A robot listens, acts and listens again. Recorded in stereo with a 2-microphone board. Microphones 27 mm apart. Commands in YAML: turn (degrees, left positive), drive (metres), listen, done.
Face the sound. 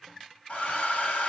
turn: 60
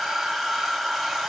done: "Found it: a hair dryer, straight ahead, 2 to 4 m away."